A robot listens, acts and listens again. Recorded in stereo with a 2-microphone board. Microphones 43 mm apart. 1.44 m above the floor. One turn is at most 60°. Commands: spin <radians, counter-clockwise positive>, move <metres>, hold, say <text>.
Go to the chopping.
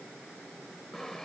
hold
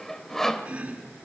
spin -0.52
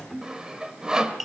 move 1.0
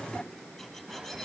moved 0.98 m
move 1.0
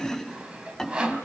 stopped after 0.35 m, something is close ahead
say Blocked. The chopping is further on, straight ahead.